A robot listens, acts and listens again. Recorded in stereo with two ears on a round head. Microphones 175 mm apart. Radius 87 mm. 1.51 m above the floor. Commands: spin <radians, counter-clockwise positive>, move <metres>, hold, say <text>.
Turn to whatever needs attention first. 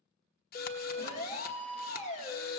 spin 0.61
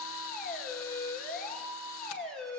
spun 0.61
say Found it: a siren, straight ahead, 2 to 4 m away.